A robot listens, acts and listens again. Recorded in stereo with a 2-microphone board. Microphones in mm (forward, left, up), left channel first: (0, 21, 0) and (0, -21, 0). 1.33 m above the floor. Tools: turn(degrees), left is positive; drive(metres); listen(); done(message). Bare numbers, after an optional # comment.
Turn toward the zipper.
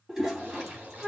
# The zipper: about 50° right or 130° right.
turn(-50)
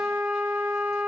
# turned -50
listen()
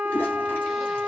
listen()
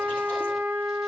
done("I heard a zipper, but can't make it out now. It was about straight ahead or 80° right.")